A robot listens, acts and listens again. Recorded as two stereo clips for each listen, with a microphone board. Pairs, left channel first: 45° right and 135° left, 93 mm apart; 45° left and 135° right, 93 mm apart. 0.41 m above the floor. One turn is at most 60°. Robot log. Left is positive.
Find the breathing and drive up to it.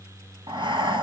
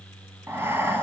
note: The breathing: 160° left.
cmd yaw +60
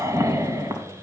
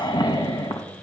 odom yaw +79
note: The breathing is now 80° left.
cmd yaw +60
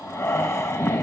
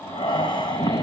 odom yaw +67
note: The breathing is now 15° left.
cmd yaw +15
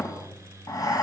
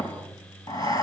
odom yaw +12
cmd fwd 1.0
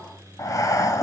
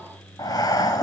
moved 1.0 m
cmd fwd 1.0
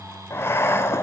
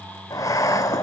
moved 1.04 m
note: The breathing is now 10° left.
cmd yaw +10
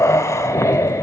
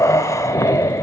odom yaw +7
cmd fwd 1.0
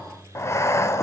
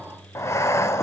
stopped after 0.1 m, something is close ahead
end: Arrived at the breathing, straight ahead.